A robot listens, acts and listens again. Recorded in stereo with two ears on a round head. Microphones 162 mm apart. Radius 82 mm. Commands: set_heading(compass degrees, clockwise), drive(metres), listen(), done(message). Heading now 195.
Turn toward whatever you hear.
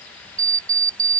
set_heading(215)
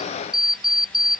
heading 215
done("Found it: an alarm clock, straight ahead.")